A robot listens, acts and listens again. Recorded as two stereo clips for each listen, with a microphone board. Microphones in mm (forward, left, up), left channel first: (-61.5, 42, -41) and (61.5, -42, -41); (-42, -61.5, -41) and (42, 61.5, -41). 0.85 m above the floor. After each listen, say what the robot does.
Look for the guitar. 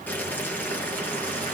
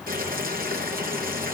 Keep listening.
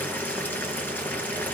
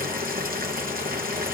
Keep listening.
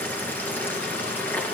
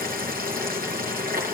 I can't make out a guitar to turn to.